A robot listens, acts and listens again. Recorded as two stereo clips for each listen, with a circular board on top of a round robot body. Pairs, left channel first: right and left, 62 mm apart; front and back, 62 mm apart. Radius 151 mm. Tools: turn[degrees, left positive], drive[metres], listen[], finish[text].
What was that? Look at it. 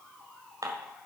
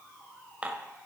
Thought: The dishes clattering: 110° left.
Action: turn[110]
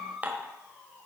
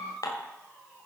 Thought: The dishes clattering is now 25° left.
Action: turn[25]
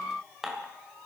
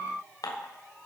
Action: finish[Facing the dishes clattering, 2 to 4 m away.]